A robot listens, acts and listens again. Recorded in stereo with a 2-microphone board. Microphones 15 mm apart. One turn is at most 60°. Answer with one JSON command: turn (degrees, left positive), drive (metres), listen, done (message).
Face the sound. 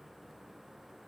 {"listen": true}
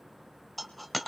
{"turn": 30}
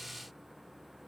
{"listen": true}
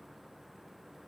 {"done": "I heard a dropped coin, but can't make it out now. It was about 30° right or 150° left."}